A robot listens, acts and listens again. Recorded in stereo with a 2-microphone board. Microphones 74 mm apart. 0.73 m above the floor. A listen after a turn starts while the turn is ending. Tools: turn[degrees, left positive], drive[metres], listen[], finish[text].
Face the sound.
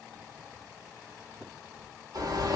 Thought: The bird: about 60° right or 120° right.
Action: turn[-60]
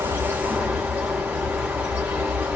Thought: So it is at 25° right.
Action: turn[-25]
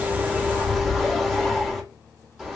Action: finish[Found it: a bird, straight ahead, 1 to 2 m away.]